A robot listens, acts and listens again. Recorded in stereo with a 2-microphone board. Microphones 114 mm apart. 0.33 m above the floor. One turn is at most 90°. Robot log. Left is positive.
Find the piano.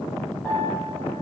cmd yaw +30
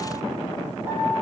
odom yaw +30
note: So it is at 20° right.
cmd yaw -20
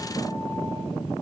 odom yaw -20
cmd idle
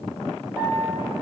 note: The piano is now 10° right.
cmd yaw -10
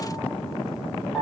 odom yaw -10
end: Found it: a piano, straight ahead, over 4 m away.